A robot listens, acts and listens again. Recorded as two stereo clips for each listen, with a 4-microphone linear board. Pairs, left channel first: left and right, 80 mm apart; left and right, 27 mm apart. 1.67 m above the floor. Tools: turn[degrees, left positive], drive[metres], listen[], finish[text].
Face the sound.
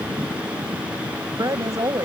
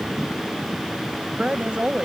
Thought: The woman speaking: about 45° right or 135° right.
Action: turn[-45]
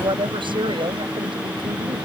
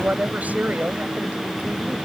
Thought: So it is at 95° right.
Action: turn[-95]
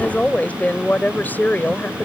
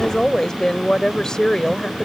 Thought: The woman speaking is now 25° left.
Action: turn[25]
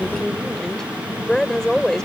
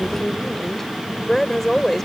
Action: finish[Found it: a woman speaking, straight ahead.]